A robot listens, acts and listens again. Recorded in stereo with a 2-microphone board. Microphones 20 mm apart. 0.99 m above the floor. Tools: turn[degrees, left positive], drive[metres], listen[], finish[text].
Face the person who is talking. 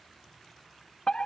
Action: listen[]
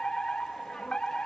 Action: listen[]
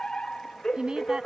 Thought: The woman speaking: about 45° right or 135° right.
Action: turn[-45]
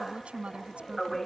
Thought: So it is at 95° right.
Action: turn[-95]
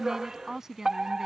Thought: The woman speaking is now 30° right.
Action: turn[-30]
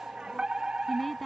Action: finish[Facing the woman speaking.]